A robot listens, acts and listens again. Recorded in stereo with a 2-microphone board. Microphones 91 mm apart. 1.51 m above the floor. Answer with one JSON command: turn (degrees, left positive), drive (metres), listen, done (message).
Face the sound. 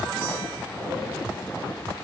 {"listen": true}
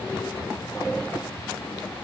{"listen": true}
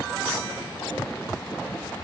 {"done": "I can't make out anything to turn to."}